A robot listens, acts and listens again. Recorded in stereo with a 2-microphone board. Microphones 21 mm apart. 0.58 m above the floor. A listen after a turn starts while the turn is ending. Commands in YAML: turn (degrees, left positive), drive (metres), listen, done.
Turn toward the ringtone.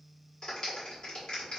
listen: true
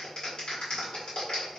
listen: true
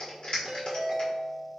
turn: -45
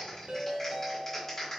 turn: -85
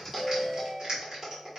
turn: -30
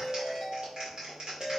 turn: -20
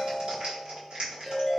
done: "Found it: a ringtone, straight ahead."